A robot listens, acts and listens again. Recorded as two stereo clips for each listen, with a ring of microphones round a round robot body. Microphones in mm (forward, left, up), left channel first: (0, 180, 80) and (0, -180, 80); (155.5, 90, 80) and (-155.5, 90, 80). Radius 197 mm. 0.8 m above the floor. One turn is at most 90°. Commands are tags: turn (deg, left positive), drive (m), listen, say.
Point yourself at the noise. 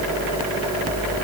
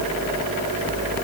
<listen/>
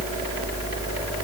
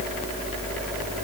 <listen/>
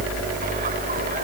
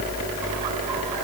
<say>I can't make out anything.</say>